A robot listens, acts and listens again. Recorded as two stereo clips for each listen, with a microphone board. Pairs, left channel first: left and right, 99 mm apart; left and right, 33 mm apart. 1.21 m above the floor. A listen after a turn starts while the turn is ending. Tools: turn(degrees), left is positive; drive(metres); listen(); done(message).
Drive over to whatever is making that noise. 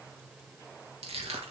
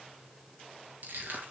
turn(degrees=-70)
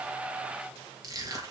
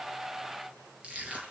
turn(degrees=-35)
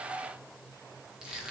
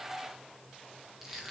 drive(metres=1.0)
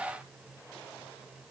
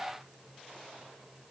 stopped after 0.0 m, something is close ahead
done("Something is in my way. I am facing the crushing but have not reached it.")